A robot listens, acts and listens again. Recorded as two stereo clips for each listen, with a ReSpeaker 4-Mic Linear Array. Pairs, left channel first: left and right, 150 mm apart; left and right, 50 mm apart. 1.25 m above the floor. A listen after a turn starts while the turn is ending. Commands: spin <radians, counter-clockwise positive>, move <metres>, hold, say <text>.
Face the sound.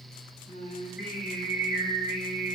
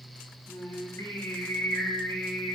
spin 1.22
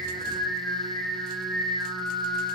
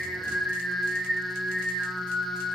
say Found it: singing, straight ahead.